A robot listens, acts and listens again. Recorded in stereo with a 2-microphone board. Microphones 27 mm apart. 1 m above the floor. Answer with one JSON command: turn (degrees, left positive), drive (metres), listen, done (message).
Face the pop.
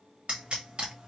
{"turn": -40}
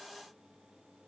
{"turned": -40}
{"listen": true}
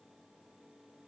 {"done": "I heard a pop, but can't make it out now. It was about straight ahead or 100° right."}